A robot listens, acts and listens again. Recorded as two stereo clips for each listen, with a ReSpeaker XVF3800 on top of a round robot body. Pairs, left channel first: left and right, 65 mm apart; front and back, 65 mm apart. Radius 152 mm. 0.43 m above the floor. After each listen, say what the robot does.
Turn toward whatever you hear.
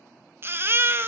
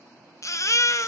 Turn 35° right.
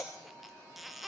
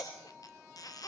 Found it: a baby crying, straight ahead, under 1 m away.